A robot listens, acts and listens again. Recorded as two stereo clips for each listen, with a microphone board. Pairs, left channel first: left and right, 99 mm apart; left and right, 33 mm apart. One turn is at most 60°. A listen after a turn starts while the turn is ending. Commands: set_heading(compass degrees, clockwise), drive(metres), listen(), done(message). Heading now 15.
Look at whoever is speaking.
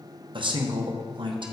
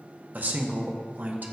set_heading(70)
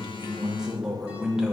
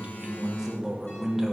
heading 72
done("Found it: a man speaking, straight ahead.")